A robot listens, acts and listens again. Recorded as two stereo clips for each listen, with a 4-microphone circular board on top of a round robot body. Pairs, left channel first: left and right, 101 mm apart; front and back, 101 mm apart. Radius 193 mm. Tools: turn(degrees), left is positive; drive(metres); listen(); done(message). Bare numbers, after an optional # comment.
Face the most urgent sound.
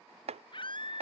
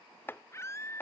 # The scream: 60° left.
turn(60)
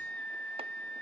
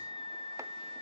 # The scream is now 15° left.
turn(15)
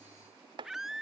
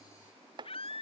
done("Facing the scream.")